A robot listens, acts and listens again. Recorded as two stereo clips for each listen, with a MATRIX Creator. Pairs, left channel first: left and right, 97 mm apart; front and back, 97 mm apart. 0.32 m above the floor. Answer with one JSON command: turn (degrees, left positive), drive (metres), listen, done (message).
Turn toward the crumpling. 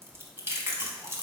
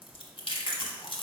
{"listen": true}
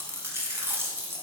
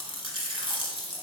{"listen": true}
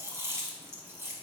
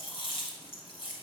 {"done": "I can't make out crumpling, only chewing."}